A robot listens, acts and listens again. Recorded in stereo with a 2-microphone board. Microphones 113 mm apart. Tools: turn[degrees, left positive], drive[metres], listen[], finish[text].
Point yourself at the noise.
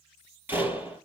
Thought: The door slam: about 20° right or 160° right.
Action: turn[-20]
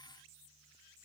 Action: listen[]
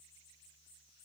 Action: finish[I heard a door slam, but can't make it out now. It was about straight ahead or 140° right.]